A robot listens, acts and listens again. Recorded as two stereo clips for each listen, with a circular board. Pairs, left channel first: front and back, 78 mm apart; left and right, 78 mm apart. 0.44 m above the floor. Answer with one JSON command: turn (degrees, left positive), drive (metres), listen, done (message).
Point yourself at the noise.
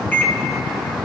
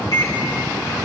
{"turn": 65}
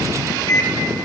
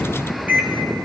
{"turn": -25}
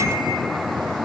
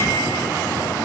{"listen": true}
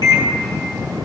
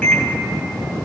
{"turn": 15}
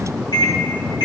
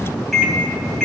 {"done": "Facing the microwave, 2 to 4 m away."}